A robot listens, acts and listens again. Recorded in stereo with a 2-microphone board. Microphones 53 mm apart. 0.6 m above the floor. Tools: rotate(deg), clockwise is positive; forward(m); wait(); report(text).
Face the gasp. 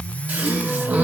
rotate(25)
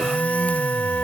wait()
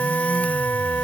report("I heard a gasp, but can't make it out now. It was about straight ahead or 130° right.")